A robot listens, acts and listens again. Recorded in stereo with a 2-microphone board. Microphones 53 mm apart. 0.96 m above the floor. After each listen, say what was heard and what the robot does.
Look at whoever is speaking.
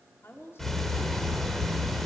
The woman speaking: about 55° left or 125° left. Turn 55° left.
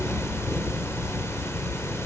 Keep listening.
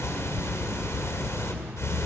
Keep listening.
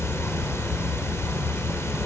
I heard a woman speaking, but can't make it out now. It was about straight ahead or 70° left.